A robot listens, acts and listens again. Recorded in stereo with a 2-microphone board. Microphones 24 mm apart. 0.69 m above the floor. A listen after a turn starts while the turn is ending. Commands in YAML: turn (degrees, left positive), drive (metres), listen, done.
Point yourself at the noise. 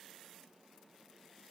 listen: true
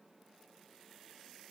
listen: true
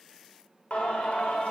turn: 70
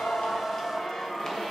turn: 25
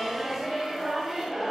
turn: -10
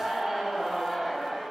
done: "Found it: singing, straight ahead, 2 to 4 m away."